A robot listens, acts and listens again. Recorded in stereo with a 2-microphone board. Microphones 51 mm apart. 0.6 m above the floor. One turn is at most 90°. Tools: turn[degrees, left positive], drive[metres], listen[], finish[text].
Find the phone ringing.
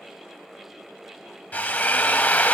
Action: listen[]
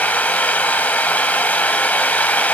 Action: listen[]
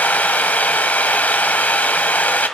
Action: finish[I can't make out a phone ringing, only a drill.]